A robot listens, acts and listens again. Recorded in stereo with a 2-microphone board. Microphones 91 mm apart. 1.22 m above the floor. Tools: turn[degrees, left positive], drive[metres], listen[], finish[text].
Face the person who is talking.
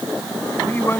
Thought: The man speaking: about 25° left or 155° left.
Action: turn[25]
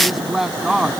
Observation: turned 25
Action: finish[Found it: a man speaking, straight ahead.]